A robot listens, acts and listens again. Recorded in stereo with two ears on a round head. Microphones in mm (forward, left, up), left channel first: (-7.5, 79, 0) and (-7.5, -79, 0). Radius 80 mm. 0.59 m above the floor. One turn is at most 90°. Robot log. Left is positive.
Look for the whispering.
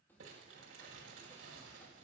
cmd idle
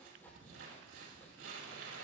cmd idle
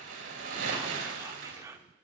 note: The whispering: about 20° right or 160° right.
cmd yaw -20
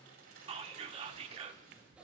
note: So it is at 140° right.
cmd yaw -90
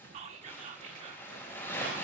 note: The whispering is now 45° right.
cmd yaw -45
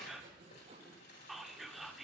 end: Facing the whispering.